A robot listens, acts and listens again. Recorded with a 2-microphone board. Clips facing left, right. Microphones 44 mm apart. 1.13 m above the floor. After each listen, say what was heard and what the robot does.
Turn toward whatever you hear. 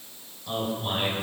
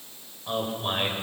The man speaking: about 30° right or 150° right. Turn 30° right.
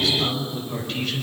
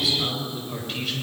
Facing the man speaking, over 4 m away.